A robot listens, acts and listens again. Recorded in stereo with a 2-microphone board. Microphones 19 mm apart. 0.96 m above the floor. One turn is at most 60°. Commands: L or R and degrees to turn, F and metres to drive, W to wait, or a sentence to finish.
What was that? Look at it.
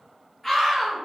L30
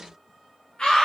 L60
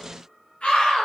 L60
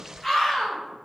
L20
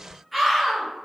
Facing the scream, 1 to 2 m away.